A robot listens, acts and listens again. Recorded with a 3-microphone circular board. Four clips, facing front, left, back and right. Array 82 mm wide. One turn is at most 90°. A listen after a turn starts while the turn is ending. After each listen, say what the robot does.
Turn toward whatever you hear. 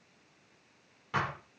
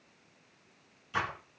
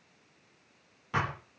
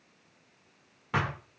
Turn 90° right.
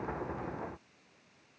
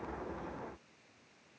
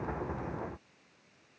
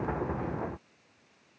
Turn 10° right.
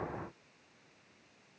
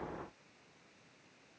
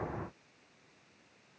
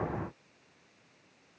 I heard a thud from this way, but can't make it out now.